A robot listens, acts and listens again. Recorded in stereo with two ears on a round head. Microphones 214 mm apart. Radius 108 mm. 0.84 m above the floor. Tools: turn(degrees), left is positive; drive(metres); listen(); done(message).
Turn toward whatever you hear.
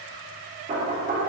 turn(degrees=-30)
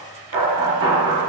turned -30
turn(degrees=-120)
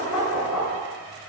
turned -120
done("Facing the knocking, 1 to 2 m away.")